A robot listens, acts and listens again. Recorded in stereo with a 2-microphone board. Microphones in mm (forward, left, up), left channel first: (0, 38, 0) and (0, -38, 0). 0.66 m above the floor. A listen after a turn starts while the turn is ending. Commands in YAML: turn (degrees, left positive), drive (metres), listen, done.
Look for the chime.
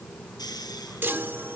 turn: -30
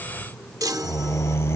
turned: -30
turn: -120
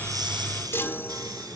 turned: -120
turn: 35
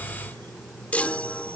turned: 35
turn: 20
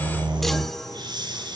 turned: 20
done: "Facing the chime."